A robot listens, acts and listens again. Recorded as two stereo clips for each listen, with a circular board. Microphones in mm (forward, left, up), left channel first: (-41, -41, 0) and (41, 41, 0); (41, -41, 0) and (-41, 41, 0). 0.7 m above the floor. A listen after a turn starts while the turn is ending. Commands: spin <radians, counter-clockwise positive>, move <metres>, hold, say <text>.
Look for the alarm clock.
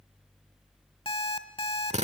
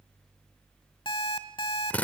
spin -1.66
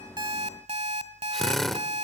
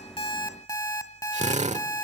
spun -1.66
spin 0.26
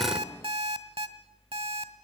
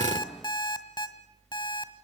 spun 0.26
say Found it: an alarm clock, straight ahead, 1 to 2 m away.